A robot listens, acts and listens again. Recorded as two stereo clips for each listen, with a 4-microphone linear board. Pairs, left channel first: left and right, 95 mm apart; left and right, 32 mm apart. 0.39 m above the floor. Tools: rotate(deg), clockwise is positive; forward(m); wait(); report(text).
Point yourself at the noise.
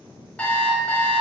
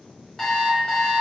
rotate(-30)
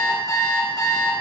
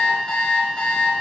rotate(-135)
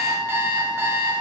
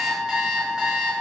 rotate(25)
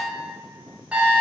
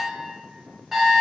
rotate(15)
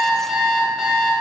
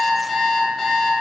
report("Facing the alarm clock.")